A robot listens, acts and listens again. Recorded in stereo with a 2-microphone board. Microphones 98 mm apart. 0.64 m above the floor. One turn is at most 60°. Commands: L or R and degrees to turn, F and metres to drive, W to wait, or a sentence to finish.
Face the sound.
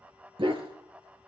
R60
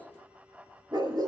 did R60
R40
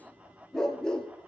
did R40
L10
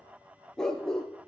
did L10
L10
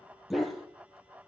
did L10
Facing the dog barking, 2 to 4 m away.